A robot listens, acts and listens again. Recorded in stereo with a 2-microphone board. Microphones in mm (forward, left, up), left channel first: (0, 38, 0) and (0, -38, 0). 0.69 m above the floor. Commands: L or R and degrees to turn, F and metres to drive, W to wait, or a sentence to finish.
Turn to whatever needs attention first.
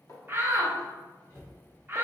R30
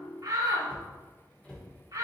R120
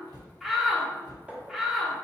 Found it: a shout, straight ahead, 1 to 2 m away.